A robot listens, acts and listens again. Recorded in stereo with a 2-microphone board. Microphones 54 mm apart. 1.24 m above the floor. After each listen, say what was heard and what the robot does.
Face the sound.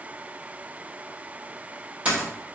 The dropped coin: about 25° right or 155° right. Turn 25° right.
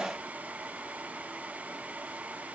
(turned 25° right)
Keep listening.
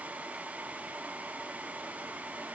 I heard a dropped coin, but can't make it out now. It was about straight ahead or 130° right.